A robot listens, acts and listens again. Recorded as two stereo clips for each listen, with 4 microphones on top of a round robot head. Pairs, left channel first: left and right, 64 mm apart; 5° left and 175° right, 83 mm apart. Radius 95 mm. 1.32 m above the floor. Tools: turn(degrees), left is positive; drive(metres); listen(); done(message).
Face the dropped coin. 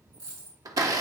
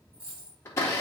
turn(degrees=-110)
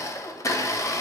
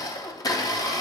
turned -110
done("I heard a dropped coin from this way, but can't make it out now.")